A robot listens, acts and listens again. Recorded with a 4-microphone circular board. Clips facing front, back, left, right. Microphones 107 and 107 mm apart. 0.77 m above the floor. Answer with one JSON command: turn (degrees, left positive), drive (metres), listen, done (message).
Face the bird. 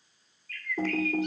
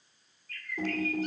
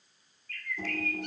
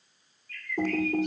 {"turn": 130}
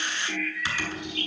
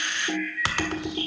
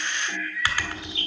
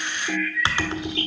{"turn": 25}
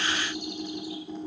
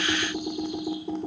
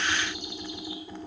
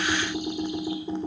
{"listen": true}
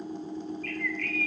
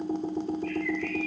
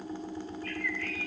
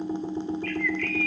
{"turn": 25}
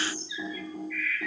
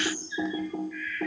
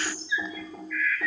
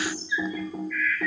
{"done": "Found it: a bird, straight ahead, 2 to 4 m away."}